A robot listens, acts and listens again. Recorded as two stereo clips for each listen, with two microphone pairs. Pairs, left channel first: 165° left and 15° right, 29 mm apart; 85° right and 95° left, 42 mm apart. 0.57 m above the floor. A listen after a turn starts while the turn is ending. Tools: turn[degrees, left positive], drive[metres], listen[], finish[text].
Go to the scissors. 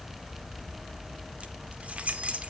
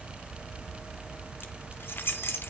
Action: listen[]
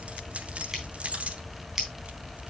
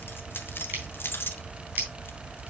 Thought: The scissors: 60° left.
Action: turn[60]
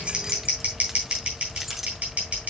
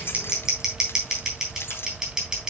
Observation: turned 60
Thought: The scissors is now 20° left.
Action: turn[20]
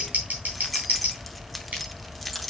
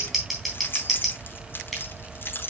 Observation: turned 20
Thought: The scissors is now 10° left.
Action: turn[10]
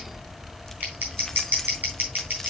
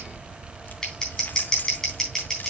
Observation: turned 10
Action: drive[1.0]
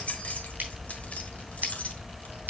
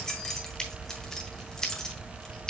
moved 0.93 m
Thought: The scissors is now 10° right.
Action: turn[-10]
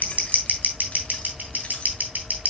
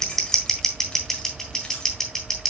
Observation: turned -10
Action: drive[1.0]
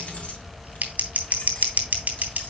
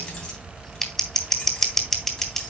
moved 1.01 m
Action: drive[1.0]
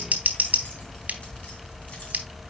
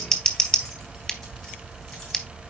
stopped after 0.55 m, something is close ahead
Action: finish[I am next to the scissors.]